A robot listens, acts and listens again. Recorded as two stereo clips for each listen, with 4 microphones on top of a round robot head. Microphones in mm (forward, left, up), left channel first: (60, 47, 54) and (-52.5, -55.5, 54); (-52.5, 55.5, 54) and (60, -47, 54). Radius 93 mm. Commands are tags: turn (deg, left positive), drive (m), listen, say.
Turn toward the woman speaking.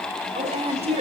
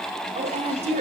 <turn deg="-90"/>
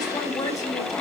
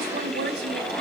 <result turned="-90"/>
<turn deg="-25"/>
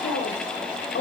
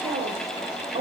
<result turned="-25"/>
<turn deg="10"/>
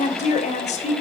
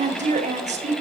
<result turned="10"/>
<say>Found it: a woman speaking, straight ahead.</say>